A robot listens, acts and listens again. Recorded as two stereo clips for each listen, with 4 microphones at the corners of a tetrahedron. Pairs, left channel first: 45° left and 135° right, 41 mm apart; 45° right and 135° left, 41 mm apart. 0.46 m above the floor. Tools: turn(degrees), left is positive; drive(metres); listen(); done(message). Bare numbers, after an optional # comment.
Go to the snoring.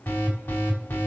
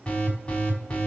listen()
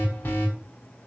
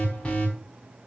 listen()
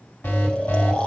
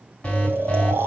# The snoring: 105° left.
turn(105)
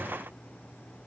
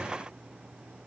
listen()
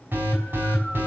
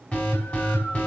listen()
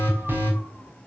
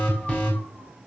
done("Facing where the snoring came from. I can't hear it now. I did not reach it.")